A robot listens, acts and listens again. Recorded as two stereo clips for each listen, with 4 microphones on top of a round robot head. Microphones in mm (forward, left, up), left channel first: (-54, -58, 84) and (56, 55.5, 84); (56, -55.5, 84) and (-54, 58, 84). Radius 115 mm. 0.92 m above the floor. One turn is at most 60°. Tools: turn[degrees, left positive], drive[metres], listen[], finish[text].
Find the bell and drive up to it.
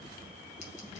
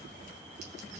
Action: listen[]
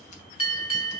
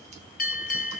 Thought: The bell: 75° right.
Action: turn[-60]
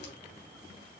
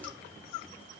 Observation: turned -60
Thought: Nothing new. It was at 15° right.
Action: turn[-15]
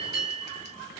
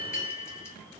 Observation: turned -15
Thought: The bell is now 15° right.
Action: turn[-15]
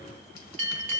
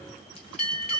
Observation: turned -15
Action: drive[1.0]
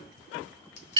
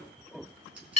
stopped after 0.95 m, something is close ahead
Action: finish[Arrived at the bell, straight ahead.]